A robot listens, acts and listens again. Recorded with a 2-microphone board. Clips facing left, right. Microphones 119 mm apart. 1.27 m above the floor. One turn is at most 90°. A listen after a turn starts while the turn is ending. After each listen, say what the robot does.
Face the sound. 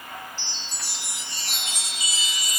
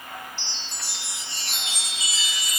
Turn 45° left.
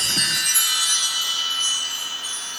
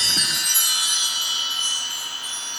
Turn 90° left.
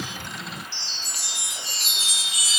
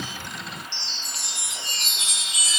Facing the chime, 2 to 4 m away.